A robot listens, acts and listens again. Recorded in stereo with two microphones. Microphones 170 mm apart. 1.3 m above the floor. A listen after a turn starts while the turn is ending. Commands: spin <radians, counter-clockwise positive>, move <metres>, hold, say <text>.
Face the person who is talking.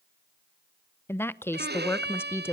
spin 0.52
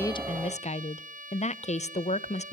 spin 2.44
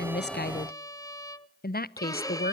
spin 1.13
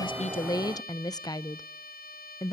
spin 0.44
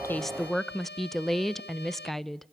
say Facing the woman speaking, under 1 m away.